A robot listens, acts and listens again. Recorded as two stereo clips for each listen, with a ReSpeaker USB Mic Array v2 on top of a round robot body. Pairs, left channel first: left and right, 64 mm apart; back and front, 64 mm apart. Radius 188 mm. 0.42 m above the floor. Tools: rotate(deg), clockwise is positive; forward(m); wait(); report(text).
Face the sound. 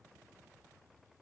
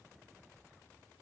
wait()
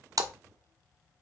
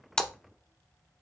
rotate(100)
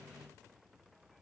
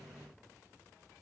report("I heard a splash from this way, but can't make it out now.")